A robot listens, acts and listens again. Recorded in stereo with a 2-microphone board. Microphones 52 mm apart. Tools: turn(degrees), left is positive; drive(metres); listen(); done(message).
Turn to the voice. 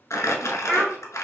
turn(degrees=30)
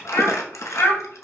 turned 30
turn(degrees=125)
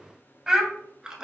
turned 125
turn(degrees=-20)
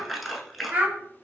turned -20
turn(degrees=-30)
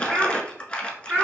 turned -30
turn(degrees=-25)
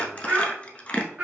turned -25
turn(degrees=-20)
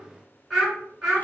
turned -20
done("Facing the child speaking.")